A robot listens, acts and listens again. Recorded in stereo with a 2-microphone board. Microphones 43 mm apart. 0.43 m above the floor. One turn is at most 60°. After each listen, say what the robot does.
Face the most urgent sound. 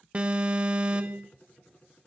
Turn 25° right.
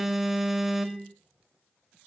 Turn 10° right.
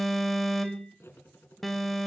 Found it: an alarm, straight ahead, 1 to 2 m away.